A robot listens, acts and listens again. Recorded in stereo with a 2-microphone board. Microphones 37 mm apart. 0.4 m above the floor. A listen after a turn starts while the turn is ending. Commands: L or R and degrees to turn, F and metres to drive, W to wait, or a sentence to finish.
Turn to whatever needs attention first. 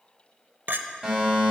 R20
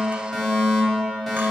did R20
Facing the fire alarm.